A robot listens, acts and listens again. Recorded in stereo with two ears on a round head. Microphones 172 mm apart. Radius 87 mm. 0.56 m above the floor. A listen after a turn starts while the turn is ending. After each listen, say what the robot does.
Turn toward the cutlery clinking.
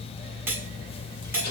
Turn 30° right.
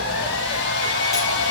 Keep listening.
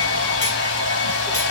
Keep listening.
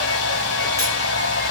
I heard cutlery clinking, but can't make it out now. It was about 15° left or 135° right.